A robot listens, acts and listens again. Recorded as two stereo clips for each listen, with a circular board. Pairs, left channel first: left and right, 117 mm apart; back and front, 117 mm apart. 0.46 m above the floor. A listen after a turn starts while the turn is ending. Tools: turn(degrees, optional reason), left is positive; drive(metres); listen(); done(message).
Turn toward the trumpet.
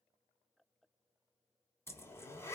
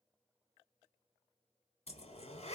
listen()
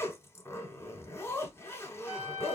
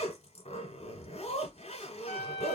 turn(degrees=-175, reason="The trumpet: 175° right.")
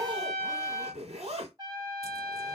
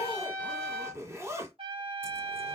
turn(degrees=-35, reason="The trumpet is now 35° right.")
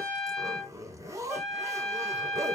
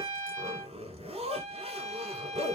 done("Found it: a trumpet, straight ahead, under 1 m away.")